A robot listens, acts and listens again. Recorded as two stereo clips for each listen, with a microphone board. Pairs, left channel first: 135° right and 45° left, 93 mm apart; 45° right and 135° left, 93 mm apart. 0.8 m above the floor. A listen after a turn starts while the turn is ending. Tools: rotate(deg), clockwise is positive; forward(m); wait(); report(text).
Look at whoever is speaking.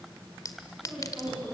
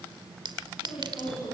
rotate(50)
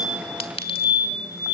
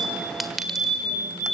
wait()
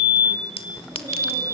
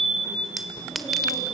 wait()
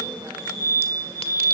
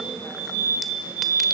report("Facing where the woman speaking came from. I can't hear it now.")